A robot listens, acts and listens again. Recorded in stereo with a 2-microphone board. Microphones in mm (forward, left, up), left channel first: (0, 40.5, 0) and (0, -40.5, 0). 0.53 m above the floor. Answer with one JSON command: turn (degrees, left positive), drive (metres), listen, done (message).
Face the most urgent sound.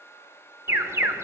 {"turn": -35}
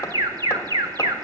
{"turn": -105}
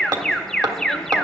{"done": "Facing the alarm, 1 to 2 m away."}